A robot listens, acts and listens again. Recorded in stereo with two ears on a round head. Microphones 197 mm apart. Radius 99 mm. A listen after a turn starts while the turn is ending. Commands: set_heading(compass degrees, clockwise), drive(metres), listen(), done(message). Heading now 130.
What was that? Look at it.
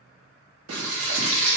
set_heading(220)
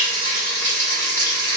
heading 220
set_heading(210)
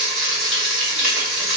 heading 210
done("Found it: frying, straight ahead, 1 to 2 m away.")